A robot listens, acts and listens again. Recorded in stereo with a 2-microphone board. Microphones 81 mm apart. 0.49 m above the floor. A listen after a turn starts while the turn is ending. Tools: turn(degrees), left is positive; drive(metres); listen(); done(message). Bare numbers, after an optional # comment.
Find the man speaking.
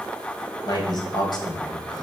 # The man speaking: about 60° left or 120° left.
turn(60)
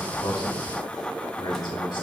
# So it is at 65° left.
turn(65)
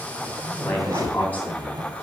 # The man speaking is now 20° left.
turn(20)
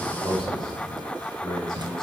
# The man speaking is now 10° left.
turn(10)
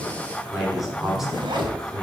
done("Found it: a man speaking, straight ahead, over 4 m away.")